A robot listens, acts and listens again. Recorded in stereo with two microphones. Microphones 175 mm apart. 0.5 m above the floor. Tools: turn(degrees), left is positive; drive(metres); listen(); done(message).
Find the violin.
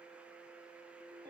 listen()
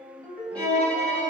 turn(degrees=30)
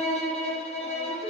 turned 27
turn(degrees=145)
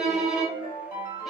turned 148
done("Found it: a violin, straight ahead.")